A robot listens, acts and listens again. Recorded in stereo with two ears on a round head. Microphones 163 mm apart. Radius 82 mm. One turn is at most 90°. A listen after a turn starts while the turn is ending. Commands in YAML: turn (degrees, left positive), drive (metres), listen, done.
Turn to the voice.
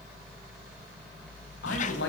turn: 75
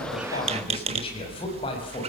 turn: 25
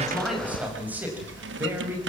turn: -10
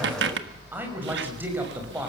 turn: -10
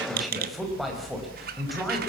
done: "Facing the man speaking, over 4 m away."